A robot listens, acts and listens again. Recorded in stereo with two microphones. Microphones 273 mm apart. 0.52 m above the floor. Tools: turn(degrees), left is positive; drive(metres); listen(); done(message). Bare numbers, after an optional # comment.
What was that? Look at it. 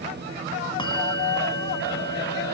# The bell: about 15° left or 165° left.
turn(15)
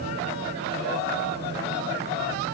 listen()
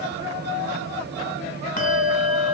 # So it is at 150° left.
turn(150)
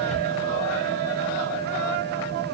# The bell is now 30° right.
turn(-30)
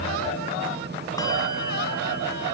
listen()
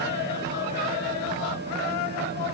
listen()
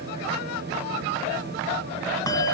# The bell is now 15° left.
turn(15)
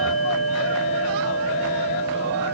done("Facing the bell, 1 to 2 m away.")